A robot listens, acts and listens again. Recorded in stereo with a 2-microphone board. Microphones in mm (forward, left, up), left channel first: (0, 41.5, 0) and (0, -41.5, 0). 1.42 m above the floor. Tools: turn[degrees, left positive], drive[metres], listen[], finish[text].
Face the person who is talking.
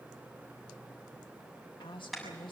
Action: turn[90]
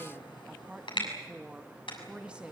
Thought: So it is at 15° right.
Action: turn[-15]
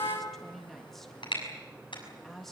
Action: finish[Facing the woman speaking.]